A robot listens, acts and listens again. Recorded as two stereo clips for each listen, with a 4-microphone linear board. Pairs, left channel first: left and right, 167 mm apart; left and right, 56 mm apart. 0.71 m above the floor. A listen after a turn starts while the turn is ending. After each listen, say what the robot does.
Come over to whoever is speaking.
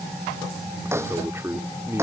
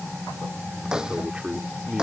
Turn 15° right.
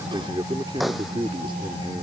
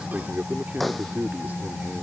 Turn 155° right.
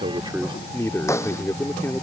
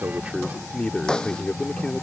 Turn 15° left.
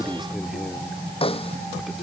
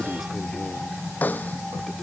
Keep listening.
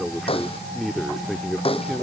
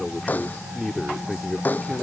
Drive 1.0 m forward.
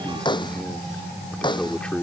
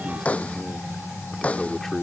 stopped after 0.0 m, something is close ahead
Something is in my way. I am facing the man speaking but have not reached it.